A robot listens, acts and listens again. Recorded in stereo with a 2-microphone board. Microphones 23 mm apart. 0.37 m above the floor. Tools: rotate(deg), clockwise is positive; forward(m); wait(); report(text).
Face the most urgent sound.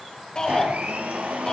rotate(-35)
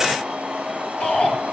rotate(-110)
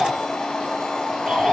rotate(-15)
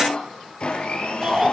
report("Found it: a shout, straight ahead.")